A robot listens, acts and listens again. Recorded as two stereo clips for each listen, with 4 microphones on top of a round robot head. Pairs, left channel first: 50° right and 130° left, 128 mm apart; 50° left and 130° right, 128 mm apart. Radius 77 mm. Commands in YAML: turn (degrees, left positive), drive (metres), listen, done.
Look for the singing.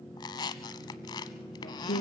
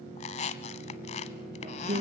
turn: -85
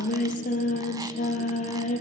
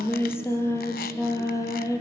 turn: -15
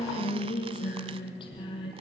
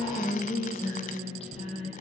done: "Found it: singing, straight ahead."